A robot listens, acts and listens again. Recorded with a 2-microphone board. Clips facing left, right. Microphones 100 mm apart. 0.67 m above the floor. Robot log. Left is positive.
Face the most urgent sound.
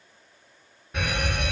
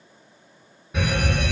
cmd yaw +30
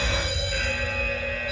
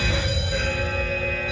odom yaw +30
note: So it is at 30° right.
cmd yaw -30
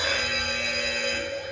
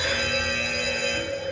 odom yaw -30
end: Facing the fire alarm, 2 to 4 m away.